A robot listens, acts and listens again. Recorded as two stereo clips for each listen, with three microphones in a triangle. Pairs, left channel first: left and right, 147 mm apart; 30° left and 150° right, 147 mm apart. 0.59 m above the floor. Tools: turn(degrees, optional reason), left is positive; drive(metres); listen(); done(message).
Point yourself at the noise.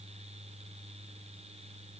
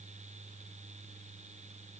listen()
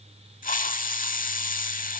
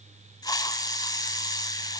turn(degrees=90, reason="The hiss: 90° left.")
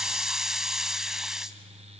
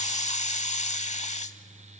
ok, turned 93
done("Found it: a hiss, straight ahead, under 1 m away.")